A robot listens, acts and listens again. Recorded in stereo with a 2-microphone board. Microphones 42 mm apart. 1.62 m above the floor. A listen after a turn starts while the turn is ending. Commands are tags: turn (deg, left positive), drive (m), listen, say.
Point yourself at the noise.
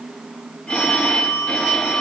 <turn deg="25"/>
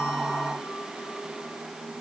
<listen/>
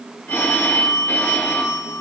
<turn deg="130"/>
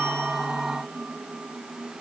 <listen/>
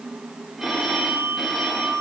<say>Facing the phone ringing, 2 to 4 m away.</say>